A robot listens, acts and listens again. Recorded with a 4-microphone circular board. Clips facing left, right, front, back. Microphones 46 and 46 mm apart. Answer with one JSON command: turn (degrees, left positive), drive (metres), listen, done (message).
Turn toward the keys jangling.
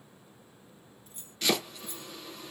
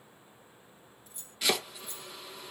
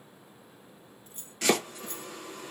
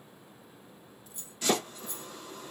{"turn": 35}
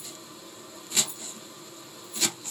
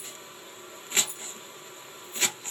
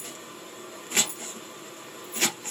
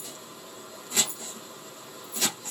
{"turn": -20}
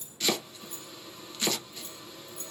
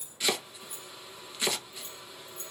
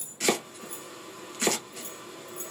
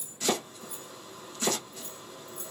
{"turn": -25}
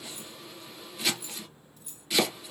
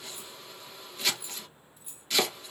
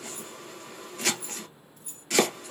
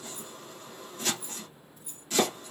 {"turn": -15}
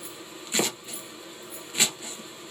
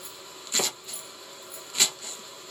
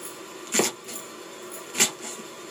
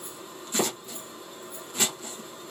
{"listen": true}
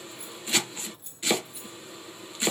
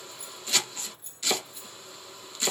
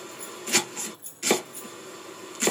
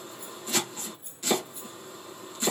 {"done": "Found it: keys jangling, straight ahead, 2 to 4 m away."}